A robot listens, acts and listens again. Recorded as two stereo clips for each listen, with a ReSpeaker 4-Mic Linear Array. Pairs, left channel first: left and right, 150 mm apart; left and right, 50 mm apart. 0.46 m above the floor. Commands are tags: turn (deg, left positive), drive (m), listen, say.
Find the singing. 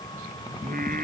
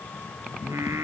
<turn deg="-75"/>
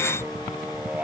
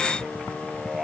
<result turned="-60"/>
<turn deg="-10"/>
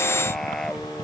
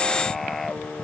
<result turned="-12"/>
<say>Found it: singing, straight ahead.</say>